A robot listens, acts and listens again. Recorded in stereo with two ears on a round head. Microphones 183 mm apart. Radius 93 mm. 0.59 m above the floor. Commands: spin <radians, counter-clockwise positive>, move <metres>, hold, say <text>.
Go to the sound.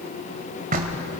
spin -0.79
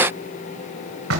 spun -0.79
spin -1.57
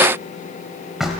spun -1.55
move 1.0
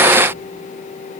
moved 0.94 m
hold
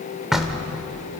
move 1.0
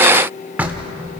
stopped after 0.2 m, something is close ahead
spin -0.17
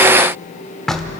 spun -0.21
say Arrived at the knocking, straight ahead.